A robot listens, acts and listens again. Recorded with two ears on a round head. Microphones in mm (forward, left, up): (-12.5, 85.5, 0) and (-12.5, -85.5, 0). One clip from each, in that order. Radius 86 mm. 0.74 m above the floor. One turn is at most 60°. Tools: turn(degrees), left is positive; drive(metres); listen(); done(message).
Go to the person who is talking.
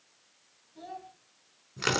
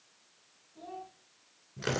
turn(degrees=40)
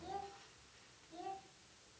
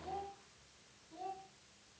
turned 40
drive(metres=1.0)
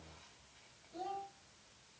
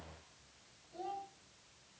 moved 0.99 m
turn(degrees=10)
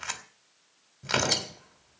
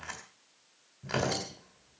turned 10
listen()
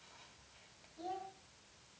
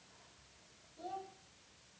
drive(metres=1.0)
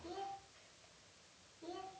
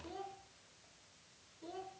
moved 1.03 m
drive(metres=1.0)
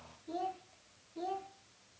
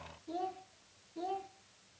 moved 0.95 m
drive(metres=1.0)
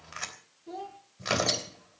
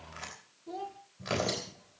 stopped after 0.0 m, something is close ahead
done("Arrived at the child speaking, straight ahead.")